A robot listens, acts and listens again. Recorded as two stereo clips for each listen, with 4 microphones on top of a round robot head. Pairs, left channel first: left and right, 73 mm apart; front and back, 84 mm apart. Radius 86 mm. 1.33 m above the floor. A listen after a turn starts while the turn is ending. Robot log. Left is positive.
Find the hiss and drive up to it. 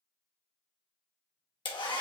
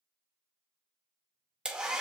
cmd idle
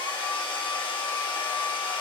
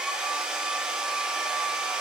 cmd idle
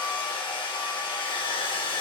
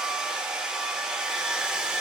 end: I can't make out a hiss to turn to.